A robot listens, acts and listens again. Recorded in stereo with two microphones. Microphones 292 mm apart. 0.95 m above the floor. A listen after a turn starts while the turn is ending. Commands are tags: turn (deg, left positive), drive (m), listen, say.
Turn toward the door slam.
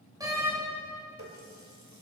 <turn deg="-30"/>
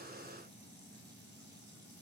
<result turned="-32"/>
<listen/>
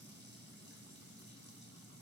<say>I heard a door slam, but can't make it out now. It was about 20° left or 135° right.</say>